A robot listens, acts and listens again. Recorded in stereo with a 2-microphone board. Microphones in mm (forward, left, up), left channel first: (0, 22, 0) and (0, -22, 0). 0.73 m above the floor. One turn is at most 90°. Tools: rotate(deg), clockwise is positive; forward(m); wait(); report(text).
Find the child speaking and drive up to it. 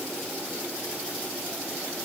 wait()
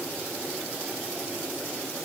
wait()
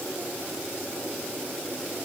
report("I can't make out a child speaking to turn to.")